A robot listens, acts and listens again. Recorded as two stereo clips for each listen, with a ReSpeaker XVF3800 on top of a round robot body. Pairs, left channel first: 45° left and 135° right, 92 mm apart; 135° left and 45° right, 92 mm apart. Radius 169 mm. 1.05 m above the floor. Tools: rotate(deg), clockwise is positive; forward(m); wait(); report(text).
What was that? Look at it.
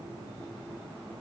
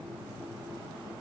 wait()
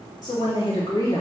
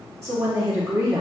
report("Found it: a woman speaking, straight ahead, 2 to 4 m away.")